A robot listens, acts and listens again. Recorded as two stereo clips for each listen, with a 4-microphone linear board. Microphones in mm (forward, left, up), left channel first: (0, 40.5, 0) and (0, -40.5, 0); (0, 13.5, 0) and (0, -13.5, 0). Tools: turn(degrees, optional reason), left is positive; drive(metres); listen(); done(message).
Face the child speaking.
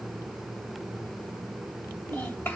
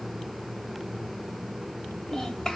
turn(degrees=20, reason="The child speaking: about 20° left or 160° left.")
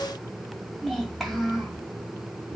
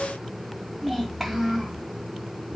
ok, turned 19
done("Facing the child speaking, 2 to 4 m away.")